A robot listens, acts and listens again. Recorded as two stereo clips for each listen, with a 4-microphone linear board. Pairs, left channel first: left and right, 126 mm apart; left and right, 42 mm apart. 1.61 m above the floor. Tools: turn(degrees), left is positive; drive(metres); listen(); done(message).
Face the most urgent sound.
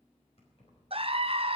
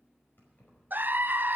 turn(degrees=-50)
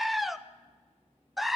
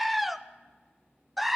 done("Found it: a scream, straight ahead, under 1 m away.")